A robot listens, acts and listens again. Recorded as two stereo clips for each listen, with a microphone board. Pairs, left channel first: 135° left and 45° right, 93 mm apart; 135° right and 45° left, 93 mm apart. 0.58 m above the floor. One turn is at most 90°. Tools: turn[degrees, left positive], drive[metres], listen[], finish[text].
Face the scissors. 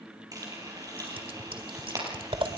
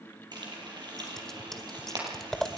Thought: The scissors: 50° right.
Action: turn[-50]
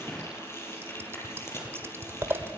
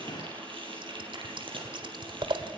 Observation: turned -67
Thought: The scissors is now 15° left.
Action: turn[15]
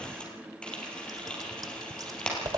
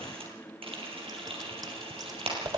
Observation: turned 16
Action: finish[Found it: scissors, straight ahead.]